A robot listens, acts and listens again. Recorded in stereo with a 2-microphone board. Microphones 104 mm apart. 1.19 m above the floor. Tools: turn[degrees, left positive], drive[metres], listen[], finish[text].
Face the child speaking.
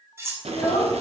Action: turn[90]
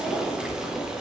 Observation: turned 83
Action: listen[]
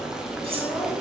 Action: listen[]
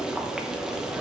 Action: finish[I heard a child speaking from this way, but can't make it out now.]